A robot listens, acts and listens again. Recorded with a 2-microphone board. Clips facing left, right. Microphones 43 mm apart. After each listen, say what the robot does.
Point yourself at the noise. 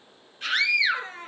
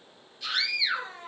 Turn 45° left.
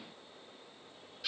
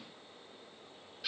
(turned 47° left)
Found it: a scream, straight ahead.